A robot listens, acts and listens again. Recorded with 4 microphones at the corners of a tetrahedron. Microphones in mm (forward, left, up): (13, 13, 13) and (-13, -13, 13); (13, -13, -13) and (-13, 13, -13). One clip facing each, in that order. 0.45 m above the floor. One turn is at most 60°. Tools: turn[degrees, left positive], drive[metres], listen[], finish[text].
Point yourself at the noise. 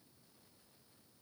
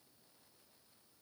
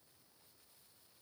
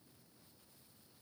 Action: listen[]
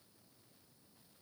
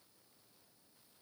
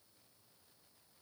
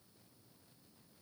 Action: listen[]
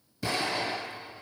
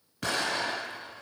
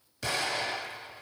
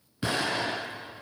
Thought: The explosion: 160° right.
Action: turn[-60]
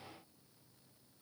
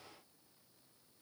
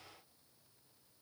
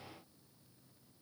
Thought: Nothing new. It was at 100° right.
Action: turn[-60]
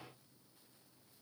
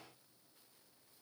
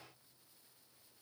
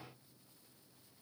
Thought: Nothing new. It was at 40° right.
Action: turn[-40]
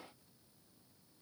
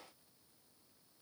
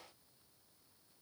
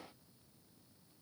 Action: finish[Facing where the explosion came from. I can't hear it now.]